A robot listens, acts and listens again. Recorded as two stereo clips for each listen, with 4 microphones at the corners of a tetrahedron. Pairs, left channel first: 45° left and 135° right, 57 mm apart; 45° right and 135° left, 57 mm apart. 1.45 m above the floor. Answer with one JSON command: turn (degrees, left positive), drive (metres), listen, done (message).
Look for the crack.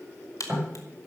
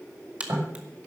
{"turn": 65}
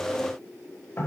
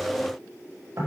{"done": "I heard a crack from this way, but can't make it out now."}